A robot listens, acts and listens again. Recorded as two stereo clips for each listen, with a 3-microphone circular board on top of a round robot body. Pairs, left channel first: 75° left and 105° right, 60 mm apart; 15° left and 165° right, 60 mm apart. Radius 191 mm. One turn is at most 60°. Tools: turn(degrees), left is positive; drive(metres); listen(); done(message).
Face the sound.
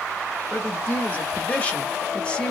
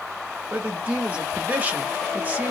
turn(degrees=60)
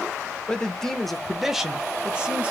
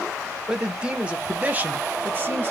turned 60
turn(degrees=-60)
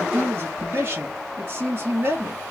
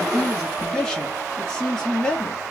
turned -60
turn(degrees=-60)
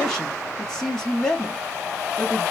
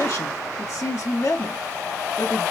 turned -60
turn(degrees=-10)
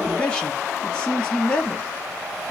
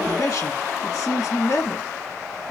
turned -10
done("Found it: a man speaking, straight ahead.")